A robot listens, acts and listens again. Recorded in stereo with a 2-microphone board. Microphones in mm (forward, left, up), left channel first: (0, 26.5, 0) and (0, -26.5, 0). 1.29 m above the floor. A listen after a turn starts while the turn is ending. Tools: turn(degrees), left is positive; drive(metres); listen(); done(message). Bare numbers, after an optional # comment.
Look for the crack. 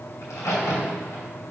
# The crack: about 70° left or 110° left.
turn(70)
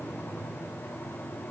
listen()
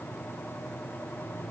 done("I heard a crack, but can't make it out now. It was about straight ahead or 40° left.")